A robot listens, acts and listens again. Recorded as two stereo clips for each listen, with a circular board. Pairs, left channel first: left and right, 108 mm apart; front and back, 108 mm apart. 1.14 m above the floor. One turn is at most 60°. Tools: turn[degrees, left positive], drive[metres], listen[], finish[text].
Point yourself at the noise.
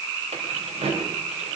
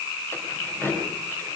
Thought: The keys jangling: 70° right.
Action: turn[-60]
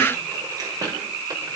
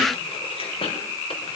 Thought: The keys jangling is now 35° right.
Action: turn[-35]
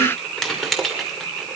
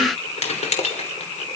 Action: finish[Found it: keys jangling, straight ahead.]